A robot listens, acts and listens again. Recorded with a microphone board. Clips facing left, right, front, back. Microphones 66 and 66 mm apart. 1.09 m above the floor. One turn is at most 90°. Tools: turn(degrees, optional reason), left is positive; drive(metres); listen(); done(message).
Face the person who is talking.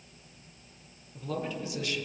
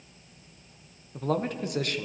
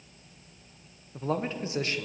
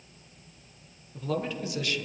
turn(degrees=-55, reason="The man speaking: 55° right.")
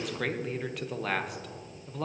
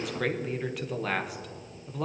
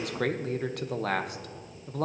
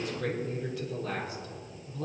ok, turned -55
done("Facing the man speaking, under 1 m away.")